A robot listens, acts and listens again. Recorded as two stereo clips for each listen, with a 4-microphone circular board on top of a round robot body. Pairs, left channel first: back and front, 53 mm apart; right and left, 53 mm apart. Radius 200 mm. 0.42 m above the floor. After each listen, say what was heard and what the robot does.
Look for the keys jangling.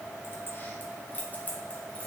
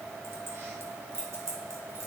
The keys jangling: 120° left. Turn 120° left.
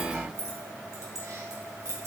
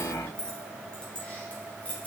The keys jangling is now 25° right. Turn 25° right.
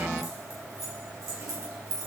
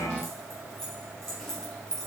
The keys jangling is now 10° right. Turn 10° right.
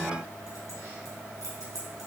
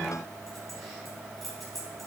Facing the keys jangling, over 4 m away.